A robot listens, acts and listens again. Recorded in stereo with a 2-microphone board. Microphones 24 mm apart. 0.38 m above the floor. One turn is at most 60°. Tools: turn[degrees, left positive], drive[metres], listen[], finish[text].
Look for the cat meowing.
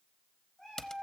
Thought: The cat meowing: about 25° left or 155° left.
Action: turn[25]
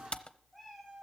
Action: finish[Facing the cat meowing, over 4 m away.]